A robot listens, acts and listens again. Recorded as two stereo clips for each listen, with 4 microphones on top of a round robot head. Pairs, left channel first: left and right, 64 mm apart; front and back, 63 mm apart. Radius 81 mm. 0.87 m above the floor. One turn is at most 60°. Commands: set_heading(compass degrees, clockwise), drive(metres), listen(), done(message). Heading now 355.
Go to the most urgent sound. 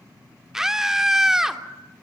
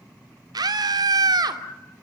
set_heading(55)
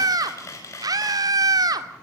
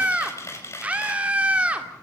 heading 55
set_heading(115)
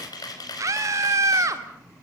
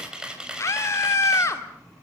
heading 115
set_heading(165)
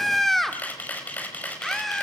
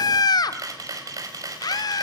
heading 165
drive(1.0)
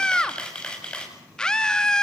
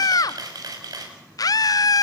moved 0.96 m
set_heading(155)
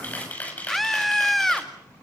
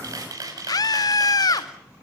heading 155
drive(1.0)
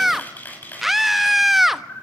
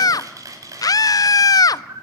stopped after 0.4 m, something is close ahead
done("Arrived at the scream, straight ahead.")